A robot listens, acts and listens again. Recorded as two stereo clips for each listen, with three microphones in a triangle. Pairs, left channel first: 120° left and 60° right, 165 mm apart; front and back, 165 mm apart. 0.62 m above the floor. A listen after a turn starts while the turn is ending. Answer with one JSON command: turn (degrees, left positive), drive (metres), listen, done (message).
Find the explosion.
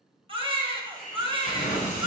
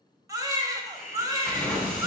{"turn": 85}
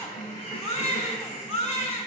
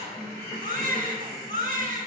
{"done": "Facing where the explosion came from. I can't hear it now."}